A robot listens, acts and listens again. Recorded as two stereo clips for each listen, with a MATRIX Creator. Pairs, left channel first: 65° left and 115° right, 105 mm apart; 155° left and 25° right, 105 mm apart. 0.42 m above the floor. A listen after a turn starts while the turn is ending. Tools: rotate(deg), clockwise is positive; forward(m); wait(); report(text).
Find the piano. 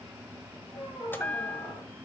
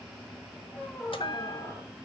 wait()
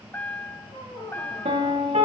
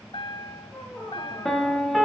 rotate(115)
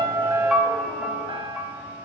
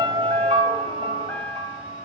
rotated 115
rotate(30)
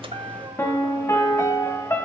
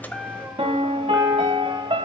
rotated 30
report("Facing the piano.")